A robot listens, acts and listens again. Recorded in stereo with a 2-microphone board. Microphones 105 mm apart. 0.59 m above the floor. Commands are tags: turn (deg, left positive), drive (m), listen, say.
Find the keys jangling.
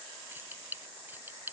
<turn deg="-20"/>
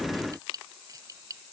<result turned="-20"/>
<turn deg="-35"/>
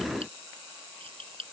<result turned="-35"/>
<turn deg="-115"/>
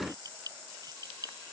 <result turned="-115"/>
<turn deg="-35"/>
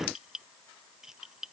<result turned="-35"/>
<say>Facing the keys jangling.</say>